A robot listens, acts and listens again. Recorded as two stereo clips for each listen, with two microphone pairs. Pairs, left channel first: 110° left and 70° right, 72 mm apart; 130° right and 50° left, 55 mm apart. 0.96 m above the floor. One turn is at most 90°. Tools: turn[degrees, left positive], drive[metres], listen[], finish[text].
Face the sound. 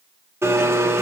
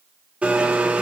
Thought: The blender: 20° right.
Action: turn[-20]
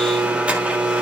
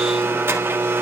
Action: finish[Found it: a blender, straight ahead.]